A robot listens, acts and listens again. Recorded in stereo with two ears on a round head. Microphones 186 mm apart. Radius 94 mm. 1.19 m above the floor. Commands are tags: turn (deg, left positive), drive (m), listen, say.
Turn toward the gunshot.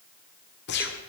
<turn deg="50"/>
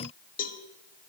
<listen/>
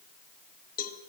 <say>I heard a gunshot, but can't make it out now. It was about straight ahead or 80° left.</say>